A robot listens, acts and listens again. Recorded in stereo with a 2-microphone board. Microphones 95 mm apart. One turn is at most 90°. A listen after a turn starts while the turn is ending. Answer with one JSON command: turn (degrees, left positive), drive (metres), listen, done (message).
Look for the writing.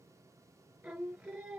{"listen": true}
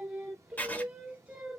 {"turn": 20}
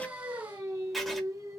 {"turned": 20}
{"done": "Found it: writing, straight ahead."}